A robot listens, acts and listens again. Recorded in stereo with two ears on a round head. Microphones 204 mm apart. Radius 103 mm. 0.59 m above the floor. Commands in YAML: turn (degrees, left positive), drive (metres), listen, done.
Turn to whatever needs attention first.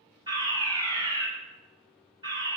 turn: -20
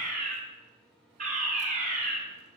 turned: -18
turn: -145
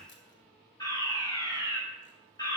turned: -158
turn: 15
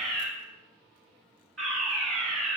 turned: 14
done: "Found it: a fire alarm, straight ahead."